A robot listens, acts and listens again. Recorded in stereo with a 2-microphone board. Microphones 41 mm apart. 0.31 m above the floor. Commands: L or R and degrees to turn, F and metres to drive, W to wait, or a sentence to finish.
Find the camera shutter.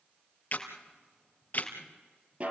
L45
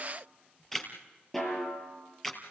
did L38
L10
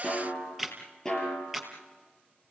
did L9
Found it: a camera shutter, straight ahead, 2 to 4 m away.